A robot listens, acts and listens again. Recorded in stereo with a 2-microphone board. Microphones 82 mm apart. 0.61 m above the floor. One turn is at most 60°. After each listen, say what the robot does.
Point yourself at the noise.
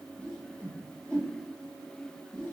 Turn 30° left.
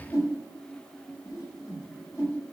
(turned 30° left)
Turn 60° left.
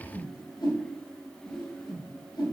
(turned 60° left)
Turn 60° left.
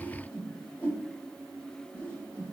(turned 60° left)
Turn 25° left.
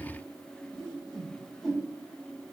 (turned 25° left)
Found it: a whoosh, straight ahead, 1 to 2 m away.